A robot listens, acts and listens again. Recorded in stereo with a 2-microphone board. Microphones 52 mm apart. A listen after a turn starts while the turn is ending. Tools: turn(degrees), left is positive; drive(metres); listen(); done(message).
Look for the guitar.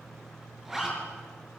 listen()
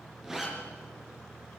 listen()
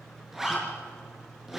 done("I can't make out a guitar, only a zipper.")